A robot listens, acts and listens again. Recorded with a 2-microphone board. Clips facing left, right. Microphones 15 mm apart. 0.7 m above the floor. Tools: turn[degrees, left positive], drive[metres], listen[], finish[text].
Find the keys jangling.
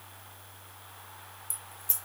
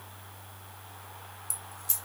Thought: The keys jangling: about 25° right or 155° right.
Action: turn[-25]
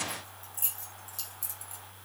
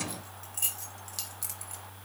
Thought: The keys jangling: about 35° right or 145° right.
Action: turn[-35]
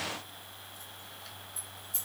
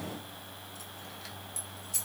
Thought: So it is at 125° right.
Action: turn[-125]
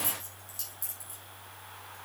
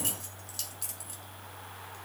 Thought: The keys jangling is now 30° right.
Action: turn[-30]
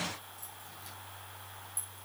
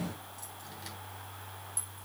Action: listen[]
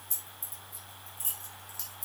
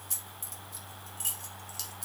Thought: The keys jangling is now 25° right.
Action: turn[-25]
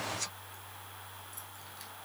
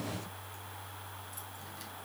Action: listen[]
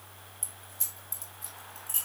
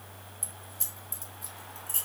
Action: finish[Found it: keys jangling, straight ahead.]